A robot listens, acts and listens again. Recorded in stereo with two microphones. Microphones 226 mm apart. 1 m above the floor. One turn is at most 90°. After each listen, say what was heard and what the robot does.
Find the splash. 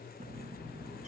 Keep listening.
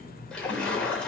Turn 30° left.
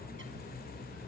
Keep listening.
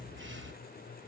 I heard a splash, but can't make it out now. It was about 25° right or 145° left.